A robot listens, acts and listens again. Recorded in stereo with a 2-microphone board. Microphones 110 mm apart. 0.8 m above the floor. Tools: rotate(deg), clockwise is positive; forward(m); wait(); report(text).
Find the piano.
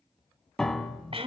rotate(-30)
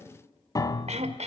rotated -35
rotate(-140)
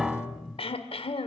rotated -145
report("Found it: a piano, straight ahead.")